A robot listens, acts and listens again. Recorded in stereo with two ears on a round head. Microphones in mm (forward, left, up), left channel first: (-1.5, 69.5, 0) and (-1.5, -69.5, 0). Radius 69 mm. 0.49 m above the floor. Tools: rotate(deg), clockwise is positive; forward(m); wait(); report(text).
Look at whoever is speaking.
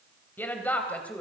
rotate(-30)
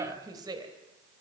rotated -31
rotate(25)
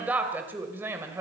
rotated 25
rotate(15)
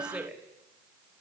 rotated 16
rotate(10)
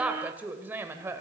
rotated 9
rotate(15)
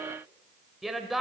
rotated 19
report("Found it: a woman speaking, straight ahead, 2 to 4 m away.")